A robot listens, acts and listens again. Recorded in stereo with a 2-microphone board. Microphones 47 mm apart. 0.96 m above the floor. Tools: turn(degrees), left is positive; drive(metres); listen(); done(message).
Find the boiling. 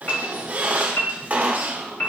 listen()
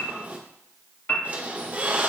listen()
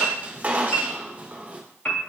done("I can't make out boiling, only a piano and a squeak.")